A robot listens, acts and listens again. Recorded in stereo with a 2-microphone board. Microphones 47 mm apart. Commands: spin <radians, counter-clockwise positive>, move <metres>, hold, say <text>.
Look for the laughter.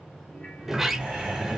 spin -0.35
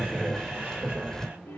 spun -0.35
spin -2.44
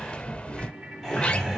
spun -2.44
say Found it: laughter, straight ahead.